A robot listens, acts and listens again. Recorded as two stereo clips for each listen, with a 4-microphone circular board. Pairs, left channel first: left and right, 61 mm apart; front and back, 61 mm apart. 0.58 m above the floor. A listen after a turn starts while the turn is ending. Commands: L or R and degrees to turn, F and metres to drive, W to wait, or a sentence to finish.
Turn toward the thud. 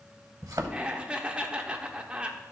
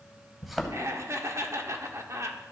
R90
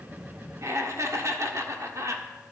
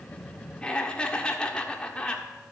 Facing where the thud came from. I can't hear it now.